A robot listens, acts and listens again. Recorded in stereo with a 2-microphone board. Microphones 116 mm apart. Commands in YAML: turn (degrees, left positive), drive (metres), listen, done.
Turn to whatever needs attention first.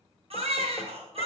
turn: -60
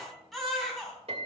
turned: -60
done: "Found it: a baby crying, straight ahead."